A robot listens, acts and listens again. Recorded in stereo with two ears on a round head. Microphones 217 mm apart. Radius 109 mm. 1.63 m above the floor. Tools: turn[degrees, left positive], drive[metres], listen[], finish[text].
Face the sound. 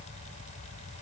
Action: listen[]
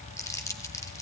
Action: turn[30]
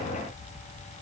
Action: listen[]
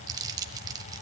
Thought: So it is at 15° right.
Action: turn[-15]
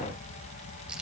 Action: finish[Found it: crumpling, straight ahead, 1 to 2 m away.]